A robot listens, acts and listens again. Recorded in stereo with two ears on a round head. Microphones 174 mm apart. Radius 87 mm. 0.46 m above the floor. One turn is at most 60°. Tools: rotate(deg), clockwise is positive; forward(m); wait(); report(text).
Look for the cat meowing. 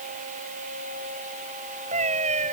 rotate(40)
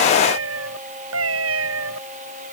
rotate(60)
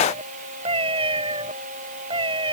rotate(25)
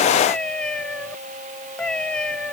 report("Facing the cat meowing.")